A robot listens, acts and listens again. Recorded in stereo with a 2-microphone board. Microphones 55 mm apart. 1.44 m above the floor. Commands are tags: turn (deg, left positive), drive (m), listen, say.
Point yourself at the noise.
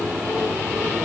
<listen/>
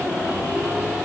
<listen/>
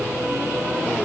<say>I can't make out anything.</say>